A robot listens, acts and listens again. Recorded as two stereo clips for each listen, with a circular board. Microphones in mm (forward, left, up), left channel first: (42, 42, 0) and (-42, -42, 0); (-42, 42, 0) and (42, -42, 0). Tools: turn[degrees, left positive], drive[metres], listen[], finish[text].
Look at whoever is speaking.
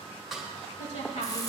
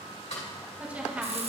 Thought: The woman speaking: 30° left.
Action: turn[30]
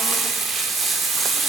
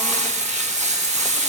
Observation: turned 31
Action: listen[]
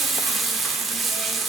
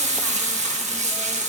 Action: listen[]
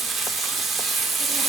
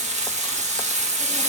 Action: finish[I heard a woman speaking from this way, but can't make it out now.]